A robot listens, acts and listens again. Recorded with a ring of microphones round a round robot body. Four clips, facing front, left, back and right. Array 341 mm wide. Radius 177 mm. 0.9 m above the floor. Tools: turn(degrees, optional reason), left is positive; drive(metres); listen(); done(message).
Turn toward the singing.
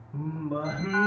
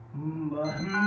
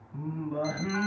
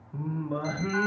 turn(degrees=-55, reason="The singing: 55° right.")
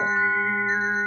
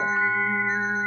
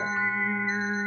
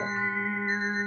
listen()
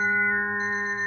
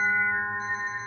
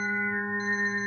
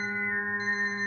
turn(degrees=-20, reason="The singing is now 20° right.")
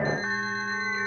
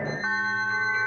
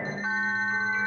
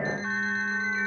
listen()
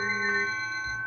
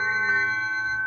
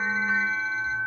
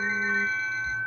listen()
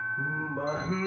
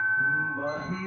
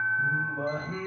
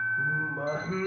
turn(degrees=-20, reason="The singing is now 20° right.")
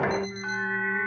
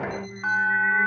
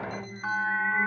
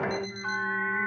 listen()
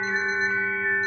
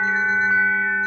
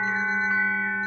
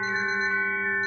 listen()
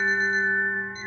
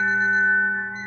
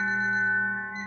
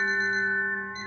done("Facing where the singing came from. I can't hear it now.")